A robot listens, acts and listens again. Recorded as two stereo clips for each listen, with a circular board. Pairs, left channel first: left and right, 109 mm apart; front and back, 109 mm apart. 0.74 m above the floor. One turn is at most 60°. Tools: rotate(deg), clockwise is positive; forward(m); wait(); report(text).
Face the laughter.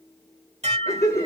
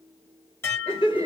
rotate(-30)
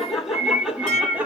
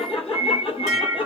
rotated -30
rotate(15)
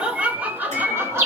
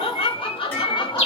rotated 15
rotate(30)
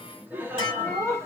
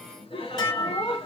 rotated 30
rotate(25)
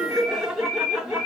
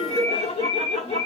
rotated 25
report("Facing the laughter, 1 to 2 m away.")